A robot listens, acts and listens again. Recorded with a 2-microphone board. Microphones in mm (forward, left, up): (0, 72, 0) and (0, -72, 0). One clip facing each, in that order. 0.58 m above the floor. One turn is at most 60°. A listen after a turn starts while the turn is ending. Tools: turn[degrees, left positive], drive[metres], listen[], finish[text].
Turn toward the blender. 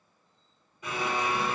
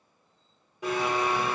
Action: turn[-60]
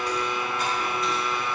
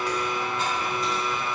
Thought: So it is at 25° right.
Action: turn[-25]
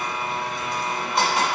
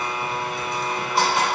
Action: finish[Found it: a blender, straight ahead.]